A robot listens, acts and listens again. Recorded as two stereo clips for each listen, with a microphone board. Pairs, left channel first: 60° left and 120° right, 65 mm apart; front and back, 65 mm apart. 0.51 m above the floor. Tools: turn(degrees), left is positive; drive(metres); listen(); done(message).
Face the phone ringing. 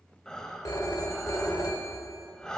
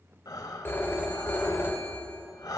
turn(degrees=50)
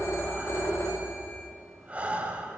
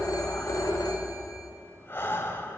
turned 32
turn(degrees=20)
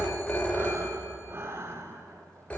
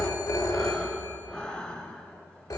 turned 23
done("Facing the phone ringing, 1 to 2 m away.")